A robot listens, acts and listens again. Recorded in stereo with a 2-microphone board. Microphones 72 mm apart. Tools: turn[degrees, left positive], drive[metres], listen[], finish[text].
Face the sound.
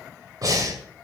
Thought: The breathing: about 55° right or 125° right.
Action: turn[-55]
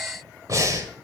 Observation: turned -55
Thought: So it is at 60° right.
Action: turn[-60]
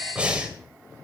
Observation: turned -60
Thought: The breathing is now 20° right.
Action: turn[-20]
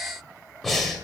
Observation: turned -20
Action: finish[Facing the breathing.]